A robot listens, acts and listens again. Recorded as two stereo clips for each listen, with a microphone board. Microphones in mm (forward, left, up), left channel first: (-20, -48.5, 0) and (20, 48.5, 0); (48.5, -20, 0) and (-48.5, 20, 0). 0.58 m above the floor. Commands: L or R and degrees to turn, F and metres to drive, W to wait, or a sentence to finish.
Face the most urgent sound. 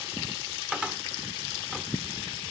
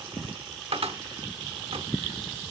W
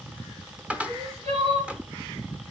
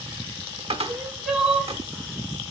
L75
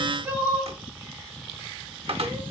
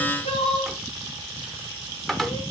Found it: crying, straight ahead.